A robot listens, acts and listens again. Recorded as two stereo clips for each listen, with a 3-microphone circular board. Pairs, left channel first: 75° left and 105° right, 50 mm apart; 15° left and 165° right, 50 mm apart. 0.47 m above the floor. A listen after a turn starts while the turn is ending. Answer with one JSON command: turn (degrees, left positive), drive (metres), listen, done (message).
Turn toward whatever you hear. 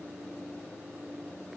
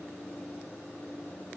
{"listen": true}
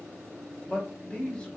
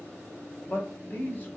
{"turn": 15}
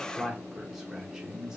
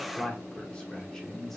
{"turn": -55}
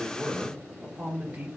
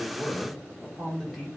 {"turn": -70}
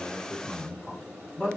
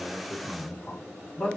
{"turn": -10}
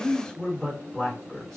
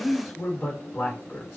{"done": "Facing the man speaking, 1 to 2 m away."}